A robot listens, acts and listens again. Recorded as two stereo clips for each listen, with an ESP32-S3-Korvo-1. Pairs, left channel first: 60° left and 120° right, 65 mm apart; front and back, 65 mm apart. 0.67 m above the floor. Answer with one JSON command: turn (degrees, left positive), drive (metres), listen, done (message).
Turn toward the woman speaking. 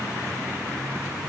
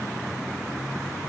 {"listen": true}
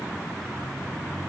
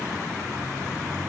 {"listen": true}
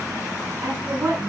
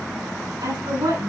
{"turn": 175}
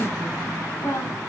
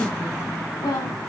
{"turn": 10}
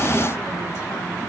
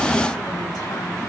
{"listen": true}
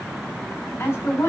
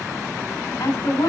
{"done": "Found it: a woman speaking, straight ahead, over 4 m away."}